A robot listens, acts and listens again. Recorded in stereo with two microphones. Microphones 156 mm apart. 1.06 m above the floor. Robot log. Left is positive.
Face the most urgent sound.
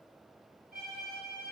cmd idle
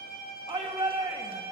note: The shout: about 35° right or 145° right.
cmd yaw -35
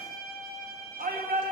note: So it is at 110° right.
cmd yaw -110
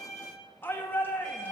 note: The shout is now 15° left.
cmd yaw +15
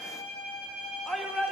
end: Facing the shout.